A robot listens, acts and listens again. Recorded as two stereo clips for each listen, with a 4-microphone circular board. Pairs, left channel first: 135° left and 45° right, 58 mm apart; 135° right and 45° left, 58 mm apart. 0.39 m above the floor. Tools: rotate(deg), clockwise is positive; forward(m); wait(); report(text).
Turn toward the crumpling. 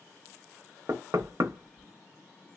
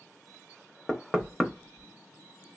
wait()
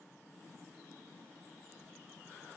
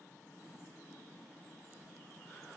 wait()
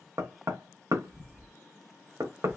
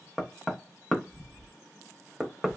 report("I can't make out crumpling, only knocking.")